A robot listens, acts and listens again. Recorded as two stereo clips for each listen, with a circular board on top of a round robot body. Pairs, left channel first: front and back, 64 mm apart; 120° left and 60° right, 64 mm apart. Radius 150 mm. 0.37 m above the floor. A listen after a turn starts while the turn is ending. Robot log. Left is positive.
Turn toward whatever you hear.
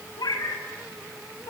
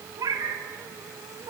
note: The cat meowing: 30° right.
cmd yaw -30
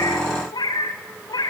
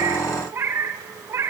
note: The cat meowing is now 10° right.
cmd yaw -10
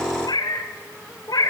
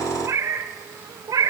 note: The cat meowing is now 30° right.
cmd yaw -30
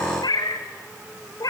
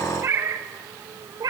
note: The cat meowing is now 30° right.
cmd yaw -30
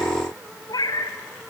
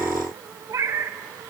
note: The cat meowing is now 20° right.
cmd yaw -20
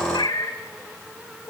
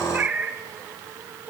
end: Facing the cat meowing, 2 to 4 m away.